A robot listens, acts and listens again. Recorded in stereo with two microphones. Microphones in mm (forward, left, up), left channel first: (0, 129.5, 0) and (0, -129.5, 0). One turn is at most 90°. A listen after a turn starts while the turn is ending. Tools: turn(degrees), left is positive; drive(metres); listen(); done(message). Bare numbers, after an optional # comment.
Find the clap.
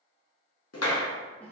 # The clap: about 70° left or 110° left.
turn(70)
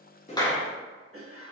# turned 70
done("Found it: a clap, straight ahead.")